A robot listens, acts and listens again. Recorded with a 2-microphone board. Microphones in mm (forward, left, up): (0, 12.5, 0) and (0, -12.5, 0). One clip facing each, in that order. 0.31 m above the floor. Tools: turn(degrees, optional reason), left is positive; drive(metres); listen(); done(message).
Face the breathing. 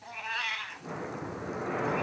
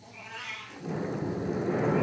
turn(degrees=65, reason="The breathing: about 65° left or 115° left.")
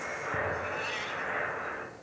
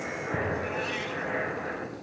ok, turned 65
turn(degrees=35, reason="So it is at 35° left.")
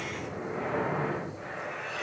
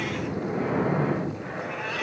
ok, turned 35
done("Facing the breathing, 2 to 4 m away.")